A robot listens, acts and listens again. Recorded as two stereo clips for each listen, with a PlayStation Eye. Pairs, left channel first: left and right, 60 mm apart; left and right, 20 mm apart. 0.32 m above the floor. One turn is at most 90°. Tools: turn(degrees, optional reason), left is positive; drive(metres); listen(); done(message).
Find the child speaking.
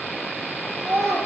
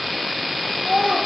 turn(degrees=-50, reason="The child speaking: about 50° right or 130° right.")
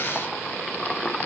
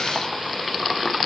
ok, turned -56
listen()
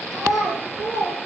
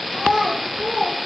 turn(degrees=-80, reason="So it is at 80° right.")
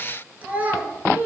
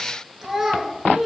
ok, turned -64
turn(degrees=-30, reason="The child speaking is now 30° right.")
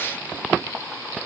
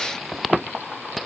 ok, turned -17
turn(degrees=-15, reason="Nothing new. It was at 15° right.")
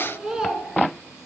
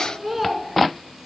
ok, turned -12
turn(degrees=-15, reason="The child speaking is now 15° right.")
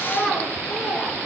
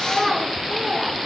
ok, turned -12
done("Facing the child speaking.")